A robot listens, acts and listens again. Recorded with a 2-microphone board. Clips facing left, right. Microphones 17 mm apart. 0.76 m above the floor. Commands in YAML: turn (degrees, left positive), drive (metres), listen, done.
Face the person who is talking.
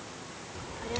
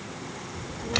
turn: 30
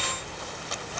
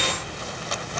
turn: 120
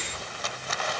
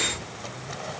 listen: true
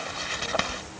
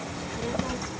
turn: -25
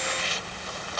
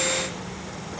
done: "Found it: a child speaking, straight ahead."